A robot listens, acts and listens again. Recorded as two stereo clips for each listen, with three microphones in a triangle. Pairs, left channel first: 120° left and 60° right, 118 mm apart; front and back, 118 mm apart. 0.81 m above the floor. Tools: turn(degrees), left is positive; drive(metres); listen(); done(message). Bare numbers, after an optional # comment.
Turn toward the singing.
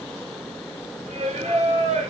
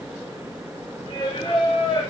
# The singing: 50° right.
turn(-50)
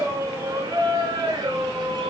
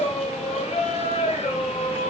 # The singing is now 15° right.
turn(-15)
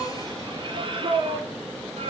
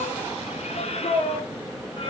# The singing is now 35° right.
turn(-35)
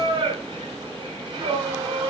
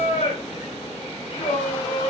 # The singing is now 15° right.
turn(-15)
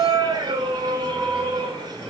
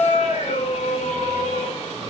# The singing is now 10° right.
turn(-10)
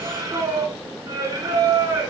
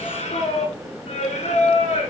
done("Facing the singing, 1 to 2 m away.")